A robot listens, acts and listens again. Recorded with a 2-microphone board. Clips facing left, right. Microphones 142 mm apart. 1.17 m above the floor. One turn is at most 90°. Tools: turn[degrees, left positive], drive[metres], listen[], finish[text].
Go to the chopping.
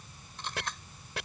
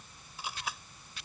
Action: turn[90]
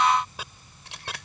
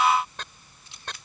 Thought: So it is at 10° left.
Action: turn[10]
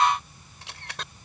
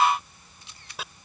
Action: drive[1.0]
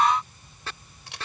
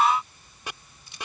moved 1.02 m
Thought: The chopping is now 15° right.
Action: turn[-15]
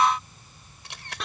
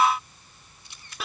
Action: drive[1.0]
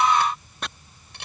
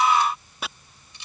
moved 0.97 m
Action: drive[1.0]
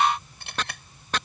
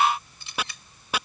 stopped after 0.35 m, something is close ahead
Thought: The chopping is now 10° right.
Action: turn[-10]
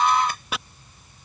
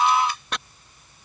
Action: finish[I am next to the chopping.]